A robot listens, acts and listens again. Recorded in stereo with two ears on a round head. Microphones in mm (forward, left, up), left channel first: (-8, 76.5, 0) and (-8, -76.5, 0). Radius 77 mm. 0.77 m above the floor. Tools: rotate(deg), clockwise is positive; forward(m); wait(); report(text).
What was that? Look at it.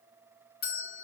rotate(-65)
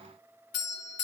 rotate(-50)
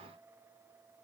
wait()
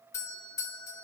rotate(-20)
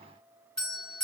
report("Facing the doorbell, over 4 m away.")